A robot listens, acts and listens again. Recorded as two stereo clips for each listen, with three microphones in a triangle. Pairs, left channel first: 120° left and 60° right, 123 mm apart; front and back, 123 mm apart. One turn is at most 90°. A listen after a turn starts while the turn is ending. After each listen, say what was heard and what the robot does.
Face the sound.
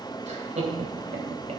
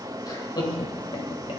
The laughter: 50° right. Turn 50° right.
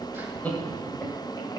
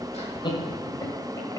The laughter is now 50° left. Turn 50° left.
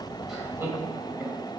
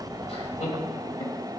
The laughter is now 15° left. Turn 15° left.
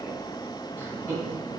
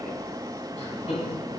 The laughter is now 15° left. Turn 15° left.
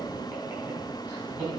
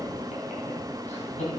Facing the laughter.